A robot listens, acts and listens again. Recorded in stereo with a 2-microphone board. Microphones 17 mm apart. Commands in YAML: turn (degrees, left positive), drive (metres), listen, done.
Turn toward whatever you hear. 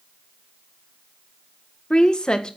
turn: 50
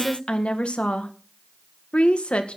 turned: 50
turn: 80
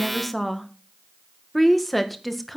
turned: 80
done: "Found it: a woman speaking, straight ahead."